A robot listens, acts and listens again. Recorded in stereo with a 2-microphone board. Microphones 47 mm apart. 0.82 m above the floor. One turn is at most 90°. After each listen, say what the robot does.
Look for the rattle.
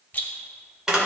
Turn 35° left.
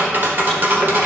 Keep listening.
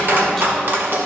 Keep listening.
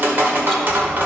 I heard a rattle, but can't make it out now. It was about straight ahead or 110° left.